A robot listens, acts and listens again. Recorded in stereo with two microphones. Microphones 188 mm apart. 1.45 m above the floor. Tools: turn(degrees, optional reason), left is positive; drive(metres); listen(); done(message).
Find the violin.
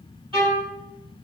turn(degrees=-30, reason="The violin: about 30° right or 150° right.")
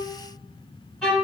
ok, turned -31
done("Found it: a violin, straight ahead, 2 to 4 m away.")